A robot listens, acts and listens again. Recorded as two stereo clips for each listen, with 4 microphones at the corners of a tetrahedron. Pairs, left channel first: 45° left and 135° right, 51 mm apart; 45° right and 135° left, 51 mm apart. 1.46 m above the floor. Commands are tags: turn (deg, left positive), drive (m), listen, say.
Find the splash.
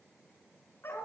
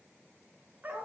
<listen/>
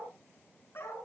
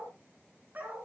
<listen/>
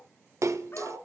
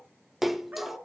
<turn deg="-140"/>
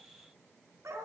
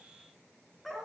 <say>Facing where the splash came from. I can't hear it now.</say>